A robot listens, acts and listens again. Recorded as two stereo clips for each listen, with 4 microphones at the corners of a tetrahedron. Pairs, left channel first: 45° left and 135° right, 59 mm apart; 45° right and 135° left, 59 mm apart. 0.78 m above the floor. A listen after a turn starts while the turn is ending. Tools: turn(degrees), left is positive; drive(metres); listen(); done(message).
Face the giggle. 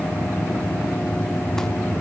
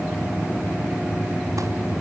listen()
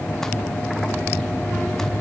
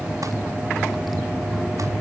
listen()
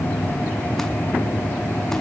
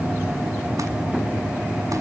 done("I can't make out a giggle to turn to.")